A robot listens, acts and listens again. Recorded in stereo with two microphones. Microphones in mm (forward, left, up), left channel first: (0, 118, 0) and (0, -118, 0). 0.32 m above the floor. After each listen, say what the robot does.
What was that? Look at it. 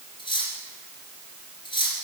Turn 20° left.
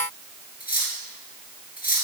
Turn 140° left.
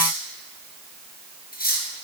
Turn 45° left.
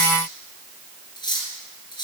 Turn 20° left.
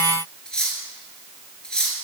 Facing the cutlery clinking, 2 to 4 m away.